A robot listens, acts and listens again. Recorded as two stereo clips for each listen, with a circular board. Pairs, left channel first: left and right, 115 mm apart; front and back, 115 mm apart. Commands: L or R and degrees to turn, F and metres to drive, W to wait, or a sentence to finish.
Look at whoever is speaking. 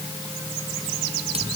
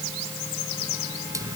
W
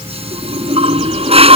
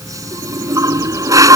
W
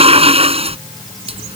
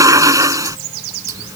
I can't make out anyone speaking to turn to.